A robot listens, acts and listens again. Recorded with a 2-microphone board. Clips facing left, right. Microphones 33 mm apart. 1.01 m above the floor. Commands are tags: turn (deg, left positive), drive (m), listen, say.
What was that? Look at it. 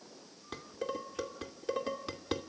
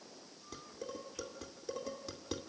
<turn deg="45"/>
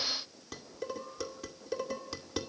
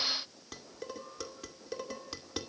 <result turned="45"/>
<say>Facing the dishes clattering.</say>